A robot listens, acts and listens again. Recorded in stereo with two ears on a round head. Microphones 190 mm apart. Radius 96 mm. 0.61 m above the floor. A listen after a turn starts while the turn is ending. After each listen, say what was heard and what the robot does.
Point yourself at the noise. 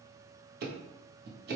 The ticking: about 50° right or 130° right. Turn 50° right.
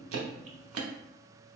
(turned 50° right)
So it is at 75° right. Turn 75° right.
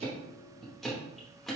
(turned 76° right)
Facing the ticking.